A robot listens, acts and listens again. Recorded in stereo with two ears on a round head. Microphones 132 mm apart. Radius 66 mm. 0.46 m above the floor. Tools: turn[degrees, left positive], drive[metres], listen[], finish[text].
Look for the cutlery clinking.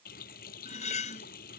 Thought: The cutlery clinking: about 50° left or 130° left.
Action: turn[50]
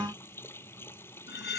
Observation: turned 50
Thought: So it is at 80° left.
Action: turn[80]
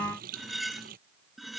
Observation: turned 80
Action: finish[Found it: cutlery clinking, straight ahead.]